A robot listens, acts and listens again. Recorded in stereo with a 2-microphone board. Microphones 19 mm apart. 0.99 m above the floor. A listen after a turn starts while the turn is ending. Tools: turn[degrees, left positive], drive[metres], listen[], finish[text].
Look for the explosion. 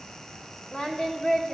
Action: listen[]
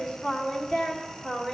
Action: listen[]
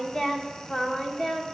Action: finish[I can't make out an explosion, only singing.]